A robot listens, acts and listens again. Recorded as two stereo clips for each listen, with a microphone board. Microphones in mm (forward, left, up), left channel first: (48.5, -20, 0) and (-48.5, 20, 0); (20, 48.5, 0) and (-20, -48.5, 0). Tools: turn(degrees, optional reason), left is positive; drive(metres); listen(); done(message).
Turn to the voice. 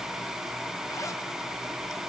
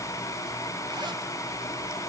listen()
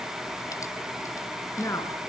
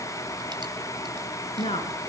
turn(degrees=40, reason="The woman speaking: 40° left.")
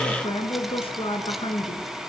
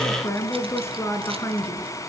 done("Found it: a woman speaking, straight ahead, over 4 m away.")